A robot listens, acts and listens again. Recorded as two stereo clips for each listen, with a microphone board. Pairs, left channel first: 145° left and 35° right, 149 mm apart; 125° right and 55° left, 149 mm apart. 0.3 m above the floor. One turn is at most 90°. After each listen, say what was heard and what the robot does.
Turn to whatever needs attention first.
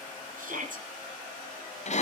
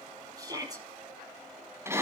The shout: 10° right. Turn 10° right.
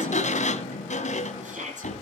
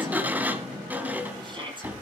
Facing the shout.